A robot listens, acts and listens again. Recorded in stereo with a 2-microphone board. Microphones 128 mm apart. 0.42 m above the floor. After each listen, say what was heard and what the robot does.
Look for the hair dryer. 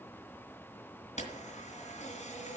Keep listening.
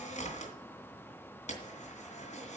Keep listening.
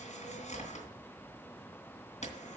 I can't make out a hair dryer, only a camera shutter.